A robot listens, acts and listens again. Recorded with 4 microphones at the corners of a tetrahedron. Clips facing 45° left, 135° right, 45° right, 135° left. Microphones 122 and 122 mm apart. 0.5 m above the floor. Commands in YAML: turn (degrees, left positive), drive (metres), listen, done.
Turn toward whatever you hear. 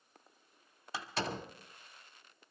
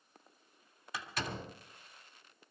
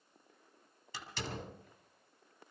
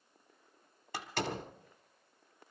turn: 105
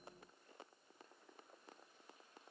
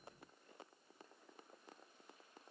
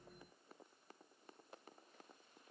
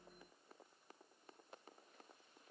done: "Facing where the door slam came from. I can't hear it now."